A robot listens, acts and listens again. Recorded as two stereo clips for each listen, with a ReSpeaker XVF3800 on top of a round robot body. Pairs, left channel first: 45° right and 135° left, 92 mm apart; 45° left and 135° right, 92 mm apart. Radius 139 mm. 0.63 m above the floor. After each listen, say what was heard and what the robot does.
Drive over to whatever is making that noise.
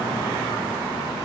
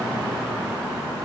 Keep listening.
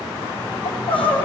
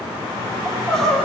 The crying: 40° right. Turn 40° right.
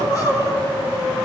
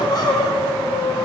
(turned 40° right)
Drive 1.0 m forward.
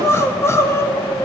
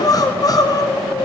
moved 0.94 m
The crying is now 10° left. Turn 10° left.
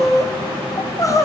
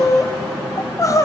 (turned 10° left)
Drive 1.0 m forward.
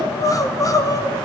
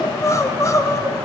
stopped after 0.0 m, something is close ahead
I am next to the crying.